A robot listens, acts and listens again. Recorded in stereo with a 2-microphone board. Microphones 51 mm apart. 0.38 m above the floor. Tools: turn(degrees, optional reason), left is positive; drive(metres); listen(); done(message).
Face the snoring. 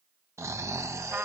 turn(degrees=-70, reason="The snoring: about 70° right or 110° right.")
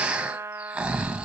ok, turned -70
turn(degrees=-20, reason="So it is at 20° right.")
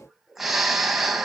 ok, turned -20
done("Found it: snoring, straight ahead.")